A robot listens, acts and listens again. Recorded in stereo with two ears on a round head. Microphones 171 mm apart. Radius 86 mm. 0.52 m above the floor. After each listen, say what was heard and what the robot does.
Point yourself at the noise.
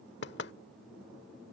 The knocking: about 60° left or 120° left. Turn 60° left.
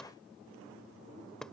Found it: knocking, straight ahead.